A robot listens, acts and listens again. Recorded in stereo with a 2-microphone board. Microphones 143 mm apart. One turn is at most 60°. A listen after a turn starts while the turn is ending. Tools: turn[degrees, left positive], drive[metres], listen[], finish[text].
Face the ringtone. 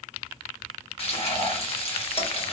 Action: listen[]
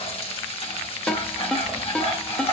Action: turn[30]
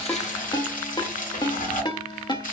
Thought: So it is at 145° left.
Action: turn[60]
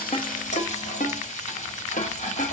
Thought: The ringtone is now 95° left.
Action: turn[60]
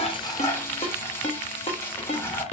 Thought: The ringtone is now 55° left.
Action: turn[55]
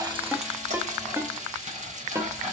Thought: The ringtone is now 20° right.
Action: turn[-20]
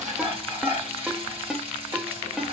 Action: finish[Found it: a ringtone, straight ahead, under 1 m away.]